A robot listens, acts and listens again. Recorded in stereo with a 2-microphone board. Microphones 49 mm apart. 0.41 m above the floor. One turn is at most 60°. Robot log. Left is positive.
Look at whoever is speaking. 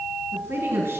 note: The woman speaking: about 70° right or 110° right.
cmd yaw -60
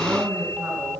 note: So it is at 40° right.
cmd yaw -40
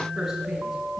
cmd idle
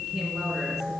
cmd idle
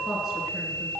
end: Facing where the woman speaking came from. I can't hear it now.